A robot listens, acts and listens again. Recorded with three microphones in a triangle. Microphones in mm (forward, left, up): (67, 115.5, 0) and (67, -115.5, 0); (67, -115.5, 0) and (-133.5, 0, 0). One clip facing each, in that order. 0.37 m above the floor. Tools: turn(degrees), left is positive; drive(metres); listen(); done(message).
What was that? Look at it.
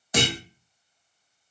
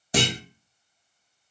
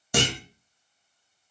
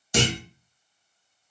turn(degrees=-35)
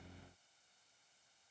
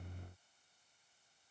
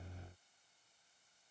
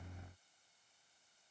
done("I heard a clunk from this way, but can't make it out now.")